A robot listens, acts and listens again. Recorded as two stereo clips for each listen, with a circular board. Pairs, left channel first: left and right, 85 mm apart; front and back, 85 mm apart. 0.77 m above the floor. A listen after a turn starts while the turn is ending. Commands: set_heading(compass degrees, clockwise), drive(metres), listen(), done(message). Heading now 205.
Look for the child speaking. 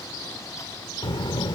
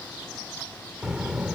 set_heading(105)
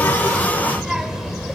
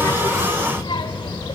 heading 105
done("Facing the child speaking, 2 to 4 m away.")